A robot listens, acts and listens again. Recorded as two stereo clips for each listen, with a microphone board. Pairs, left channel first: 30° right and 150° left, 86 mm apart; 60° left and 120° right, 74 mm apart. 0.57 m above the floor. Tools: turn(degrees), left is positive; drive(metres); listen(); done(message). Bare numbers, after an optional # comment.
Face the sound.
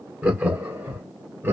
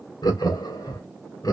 # The laughter: 90° left.
turn(90)
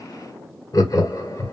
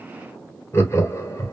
# The laughter is now 20° left.
turn(20)
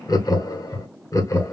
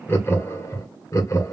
# The laughter is now 20° left.
turn(20)
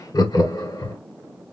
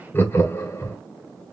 # The laughter is now 10° left.
turn(10)
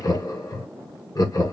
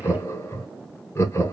# The laughter is now 10° left.
turn(10)
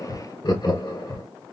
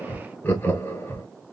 done("Facing the laughter, 1 to 2 m away.")